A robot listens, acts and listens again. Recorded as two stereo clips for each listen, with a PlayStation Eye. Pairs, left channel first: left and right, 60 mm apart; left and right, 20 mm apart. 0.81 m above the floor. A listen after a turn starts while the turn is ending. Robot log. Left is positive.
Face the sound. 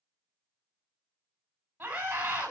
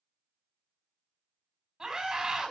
note: The scream: about 25° right or 155° right.
cmd yaw -25
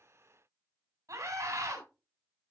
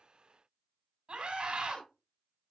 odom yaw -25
note: So it is at 130° right.
cmd yaw -130
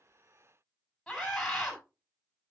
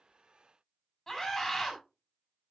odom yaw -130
end: Facing the scream.